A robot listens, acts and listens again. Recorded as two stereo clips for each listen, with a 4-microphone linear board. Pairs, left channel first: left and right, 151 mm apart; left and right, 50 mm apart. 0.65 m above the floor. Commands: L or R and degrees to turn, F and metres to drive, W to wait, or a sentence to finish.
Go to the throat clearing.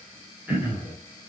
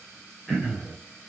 R30
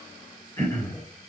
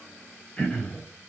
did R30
L20
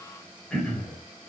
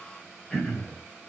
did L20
F1.0
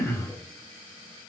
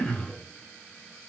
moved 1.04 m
L15
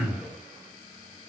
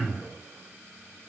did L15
F1.0
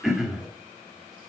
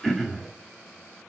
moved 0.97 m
F1.0
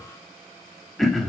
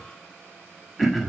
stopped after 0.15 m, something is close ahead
I am next to the throat clearing.